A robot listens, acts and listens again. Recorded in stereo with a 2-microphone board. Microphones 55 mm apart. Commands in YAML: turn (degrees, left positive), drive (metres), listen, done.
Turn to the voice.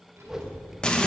turn: -45
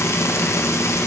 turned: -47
listen: true
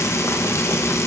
listen: true
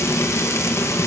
done: "I heard a child speaking, but can't make it out now. It was about straight ahead or 85° right."